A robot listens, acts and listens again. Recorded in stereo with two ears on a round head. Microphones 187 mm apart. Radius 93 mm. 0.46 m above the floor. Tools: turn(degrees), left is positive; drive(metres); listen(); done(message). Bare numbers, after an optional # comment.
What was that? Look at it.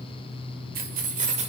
# The keys jangling: about 30° right or 150° right.
turn(-30)
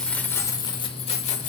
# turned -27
# So it is at 35° left.
turn(35)
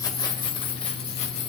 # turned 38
# The keys jangling is now 30° left.
turn(30)
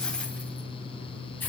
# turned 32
# The keys jangling is now 10° left.
turn(10)
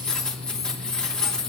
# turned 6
done("Found it: keys jangling, straight ahead, 2 to 4 m away.")